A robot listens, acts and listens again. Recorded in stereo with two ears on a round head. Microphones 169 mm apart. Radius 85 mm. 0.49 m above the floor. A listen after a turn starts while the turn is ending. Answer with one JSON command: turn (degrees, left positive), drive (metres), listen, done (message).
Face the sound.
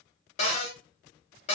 {"turn": 35}
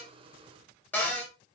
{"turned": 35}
{"turn": 15}
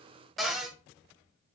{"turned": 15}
{"done": "Facing the cupboard door."}